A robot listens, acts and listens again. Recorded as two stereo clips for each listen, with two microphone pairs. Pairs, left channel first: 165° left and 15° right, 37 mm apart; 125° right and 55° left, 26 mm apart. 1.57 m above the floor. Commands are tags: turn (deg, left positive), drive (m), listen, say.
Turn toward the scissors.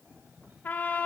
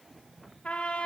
<listen/>
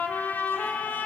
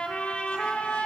<listen/>
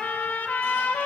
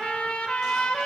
<say>I can't make out scissors, only a cough and a trumpet.</say>